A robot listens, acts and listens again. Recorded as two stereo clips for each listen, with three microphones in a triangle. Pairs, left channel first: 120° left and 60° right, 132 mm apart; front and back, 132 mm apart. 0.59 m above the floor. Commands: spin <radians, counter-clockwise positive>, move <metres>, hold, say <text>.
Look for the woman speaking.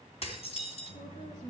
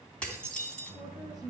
spin 2.09
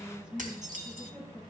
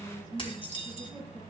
say Facing the woman speaking, over 4 m away.